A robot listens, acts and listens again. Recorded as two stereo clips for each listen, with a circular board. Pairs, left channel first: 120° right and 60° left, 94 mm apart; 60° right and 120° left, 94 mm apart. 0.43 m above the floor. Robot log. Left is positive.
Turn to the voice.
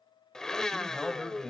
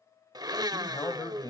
note: The man speaking: 35° right.
cmd yaw -35
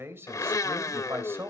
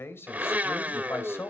end: Facing the man speaking, 2 to 4 m away.